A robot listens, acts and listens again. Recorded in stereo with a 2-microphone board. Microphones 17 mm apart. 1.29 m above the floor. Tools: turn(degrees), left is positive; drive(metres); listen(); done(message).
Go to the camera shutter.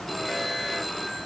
listen()
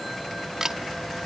turn(degrees=-30)
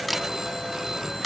drive(metres=1.0)
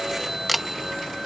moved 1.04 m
drive(metres=1.0)
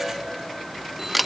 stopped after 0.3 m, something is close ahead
done("I am next to the camera shutter.")